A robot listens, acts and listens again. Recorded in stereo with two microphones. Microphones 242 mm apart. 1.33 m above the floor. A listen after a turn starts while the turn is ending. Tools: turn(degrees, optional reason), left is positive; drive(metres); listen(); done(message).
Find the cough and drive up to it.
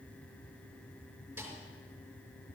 listen()
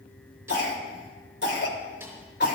turn(degrees=50, reason="The cough: about 50° left or 130° left.")
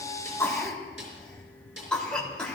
drive(metres=1.0)
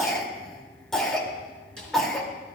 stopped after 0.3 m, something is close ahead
done("Something is in my way. I am facing the cough but have not reached it.")